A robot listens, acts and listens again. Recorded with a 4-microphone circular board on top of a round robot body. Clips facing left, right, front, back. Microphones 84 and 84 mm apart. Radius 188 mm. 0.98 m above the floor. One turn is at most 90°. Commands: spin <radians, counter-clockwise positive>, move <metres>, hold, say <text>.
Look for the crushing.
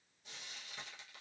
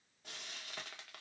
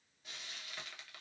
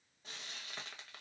hold
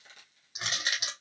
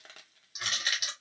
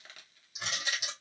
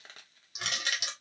spin 1.57
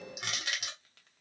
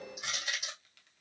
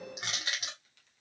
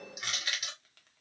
spin 1.05
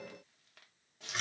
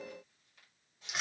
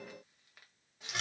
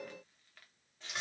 say Found it: crushing, straight ahead.